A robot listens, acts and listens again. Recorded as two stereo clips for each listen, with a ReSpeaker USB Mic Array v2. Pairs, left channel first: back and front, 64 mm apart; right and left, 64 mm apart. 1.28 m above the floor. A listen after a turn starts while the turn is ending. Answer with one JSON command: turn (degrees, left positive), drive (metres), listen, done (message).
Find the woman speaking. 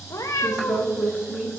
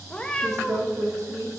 {"turn": 75}
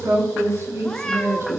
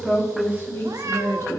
{"turn": -50}
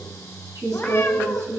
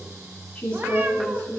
{"turn": -25}
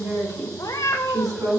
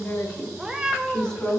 {"turn": -15}
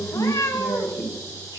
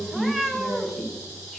{"done": "Facing the woman speaking."}